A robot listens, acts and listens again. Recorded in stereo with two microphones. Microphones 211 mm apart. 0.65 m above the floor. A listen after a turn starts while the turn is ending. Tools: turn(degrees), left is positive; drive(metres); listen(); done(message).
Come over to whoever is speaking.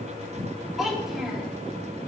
turn(degrees=30)
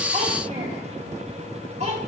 turn(degrees=-35)
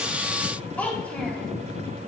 drive(metres=1.0)
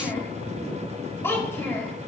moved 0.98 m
turn(degrees=10)
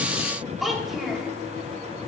drive(metres=1.0)
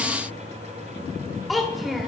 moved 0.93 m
drive(metres=1.0)
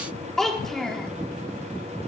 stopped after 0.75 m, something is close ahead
done("Arrived at the child speaking, straight ahead.")